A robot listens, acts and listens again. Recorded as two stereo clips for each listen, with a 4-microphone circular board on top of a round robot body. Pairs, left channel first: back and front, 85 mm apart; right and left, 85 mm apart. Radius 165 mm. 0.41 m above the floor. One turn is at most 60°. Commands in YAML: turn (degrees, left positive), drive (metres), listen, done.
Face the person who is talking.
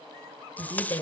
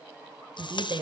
turn: 60
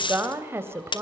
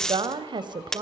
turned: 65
turn: 60
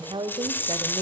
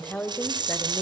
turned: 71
turn: -25
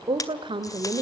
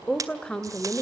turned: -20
turn: -15
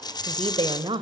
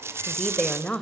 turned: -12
turn: -15
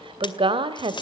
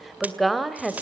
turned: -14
done: "Facing the woman speaking, 2 to 4 m away."